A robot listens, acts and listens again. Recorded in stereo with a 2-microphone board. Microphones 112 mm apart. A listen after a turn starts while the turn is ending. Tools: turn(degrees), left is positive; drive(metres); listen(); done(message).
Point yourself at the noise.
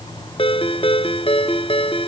turn(degrees=55)
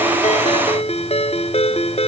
turn(degrees=70)
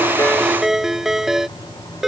done("Facing the ringtone.")